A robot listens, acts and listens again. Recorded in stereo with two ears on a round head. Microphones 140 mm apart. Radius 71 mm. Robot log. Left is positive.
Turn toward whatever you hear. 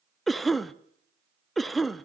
cmd yaw +30
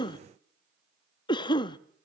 note: So it is at 145° left.
cmd yaw +145
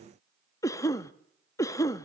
note: The cough is now 20° left.
cmd yaw +20
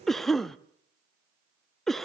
end: Found it: a cough, straight ahead, under 1 m away.